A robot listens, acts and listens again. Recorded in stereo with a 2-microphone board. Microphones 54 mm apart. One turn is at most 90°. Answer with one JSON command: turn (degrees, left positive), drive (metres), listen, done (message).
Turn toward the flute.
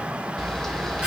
{"listen": true}
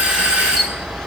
{"listen": true}
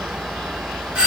{"done": "I can't make out a flute, only a doorbell and a camera shutter."}